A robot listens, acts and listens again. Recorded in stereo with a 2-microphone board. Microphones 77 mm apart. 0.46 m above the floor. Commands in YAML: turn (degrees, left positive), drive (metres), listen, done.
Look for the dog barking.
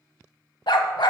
turn: 90
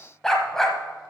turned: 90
done: "Facing the dog barking, under 1 m away."